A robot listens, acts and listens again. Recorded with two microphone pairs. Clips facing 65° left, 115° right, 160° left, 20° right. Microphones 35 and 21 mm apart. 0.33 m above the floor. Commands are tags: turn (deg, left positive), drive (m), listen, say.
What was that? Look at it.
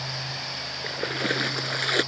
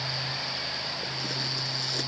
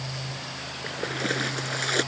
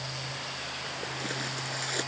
<turn deg="100"/>
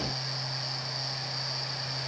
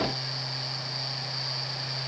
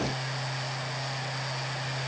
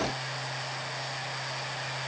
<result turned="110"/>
<turn deg="-10"/>
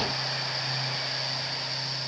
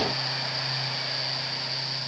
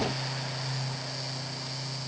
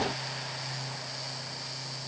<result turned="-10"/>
<say>I heard a splash from this way, but can't make it out now.</say>